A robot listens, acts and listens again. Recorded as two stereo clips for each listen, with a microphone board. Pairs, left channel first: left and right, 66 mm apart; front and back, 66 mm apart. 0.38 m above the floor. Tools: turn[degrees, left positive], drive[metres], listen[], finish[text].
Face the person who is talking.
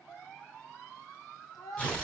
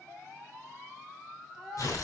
Thought: The child speaking: 95° left.
Action: turn[95]
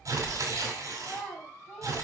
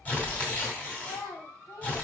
Thought: The child speaking is now 10° left.
Action: turn[10]
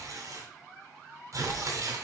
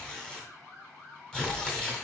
Action: listen[]
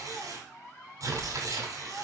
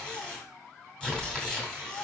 Action: listen[]
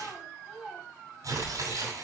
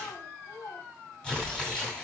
Action: finish[Facing the child speaking, 2 to 4 m away.]